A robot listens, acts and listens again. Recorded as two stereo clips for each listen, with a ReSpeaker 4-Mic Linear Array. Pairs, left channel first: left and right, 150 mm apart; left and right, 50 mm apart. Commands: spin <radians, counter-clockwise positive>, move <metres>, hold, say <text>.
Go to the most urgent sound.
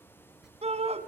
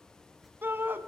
spin -0.79
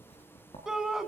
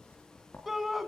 move 1.0
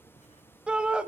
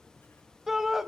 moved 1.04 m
spin -0.17
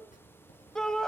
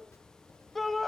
move 1.0
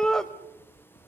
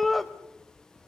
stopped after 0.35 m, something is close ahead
say I am next to the shout.